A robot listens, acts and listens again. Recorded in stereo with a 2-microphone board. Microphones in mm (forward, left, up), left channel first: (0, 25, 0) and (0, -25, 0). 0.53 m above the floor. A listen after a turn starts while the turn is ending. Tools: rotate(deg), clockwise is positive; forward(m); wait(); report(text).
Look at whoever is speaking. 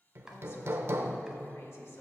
rotate(-60)
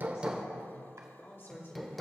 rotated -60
rotate(-50)
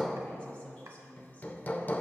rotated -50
rotate(-30)
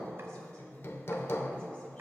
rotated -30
wait()
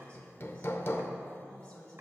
rotate(-20)
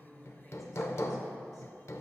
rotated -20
wait()
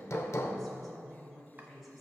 report("Facing the woman speaking.")